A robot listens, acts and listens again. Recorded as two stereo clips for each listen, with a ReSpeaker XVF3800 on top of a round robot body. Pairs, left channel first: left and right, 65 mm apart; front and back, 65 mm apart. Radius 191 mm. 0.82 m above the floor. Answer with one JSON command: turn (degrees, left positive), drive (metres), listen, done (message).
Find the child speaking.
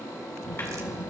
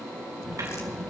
{"turn": 90}
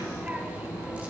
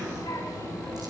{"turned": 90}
{"turn": -25}
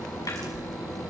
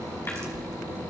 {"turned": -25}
{"done": "Found it: a child speaking, straight ahead, over 4 m away."}